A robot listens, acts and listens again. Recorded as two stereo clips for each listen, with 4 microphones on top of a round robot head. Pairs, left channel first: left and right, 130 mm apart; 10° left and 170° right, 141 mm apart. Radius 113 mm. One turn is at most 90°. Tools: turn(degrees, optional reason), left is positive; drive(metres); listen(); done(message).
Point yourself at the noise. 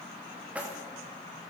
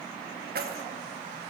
turn(degrees=-90, reason="The keys jangling: 170° right.")
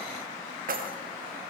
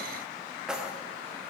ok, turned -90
turn(degrees=-85, reason="The keys jangling is now 85° right.")
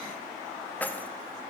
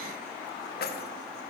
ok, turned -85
turn(degrees=10, reason="The keys jangling is now 10° left.")
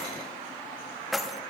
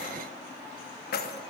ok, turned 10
done("Facing the keys jangling, 1 to 2 m away.")